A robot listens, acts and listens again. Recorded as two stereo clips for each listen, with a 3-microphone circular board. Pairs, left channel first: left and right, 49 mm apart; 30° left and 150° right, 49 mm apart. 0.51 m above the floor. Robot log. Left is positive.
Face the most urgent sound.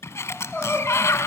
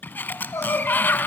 note: The crying: 20° left.
cmd yaw +20
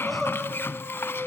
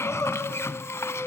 end: Found it: crying, straight ahead, over 4 m away.